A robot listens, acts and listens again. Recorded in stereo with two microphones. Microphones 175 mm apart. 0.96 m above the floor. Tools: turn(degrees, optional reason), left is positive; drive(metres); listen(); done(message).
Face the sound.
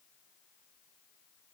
listen()
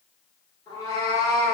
turn(degrees=20, reason="The cat meowing: about 20° left or 160° left.")
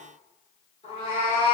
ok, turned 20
turn(degrees=135, reason="So it is at 135° left.")
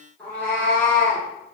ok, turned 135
turn(degrees=10, reason="The cat meowing is now 10° left.")
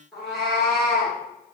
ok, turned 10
done("Facing the cat meowing.")